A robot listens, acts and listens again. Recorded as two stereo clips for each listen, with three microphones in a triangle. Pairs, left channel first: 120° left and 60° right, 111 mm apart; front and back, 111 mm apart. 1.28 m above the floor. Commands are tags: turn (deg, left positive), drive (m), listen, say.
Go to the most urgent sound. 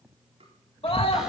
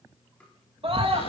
<turn deg="150"/>
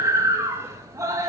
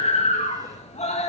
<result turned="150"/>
<drive m="1.0"/>
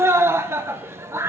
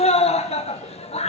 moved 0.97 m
<drive m="1.0"/>
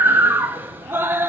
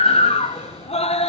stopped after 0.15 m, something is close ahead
<turn deg="10"/>
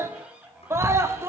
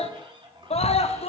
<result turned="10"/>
<say>Arrived at the scream, straight ahead.</say>